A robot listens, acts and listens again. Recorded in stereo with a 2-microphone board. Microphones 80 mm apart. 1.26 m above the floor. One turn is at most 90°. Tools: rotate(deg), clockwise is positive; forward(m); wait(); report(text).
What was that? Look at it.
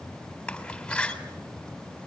rotate(-30)
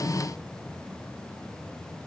wait()
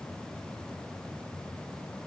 report("I heard a door slam, but can't make it out now. It was about 20° right or 140° left.")